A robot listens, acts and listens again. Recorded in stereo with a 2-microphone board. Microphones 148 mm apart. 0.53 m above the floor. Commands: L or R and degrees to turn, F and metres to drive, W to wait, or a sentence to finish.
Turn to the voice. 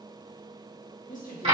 L60
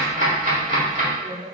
L25
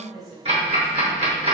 Facing the woman speaking, 2 to 4 m away.